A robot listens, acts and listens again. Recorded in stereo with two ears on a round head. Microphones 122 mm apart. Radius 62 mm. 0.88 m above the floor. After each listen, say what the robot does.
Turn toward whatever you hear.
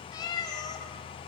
Turn 30° left.
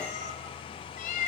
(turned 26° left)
Turn 115° left.
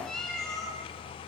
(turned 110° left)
Found it: a cat meowing, straight ahead, over 4 m away.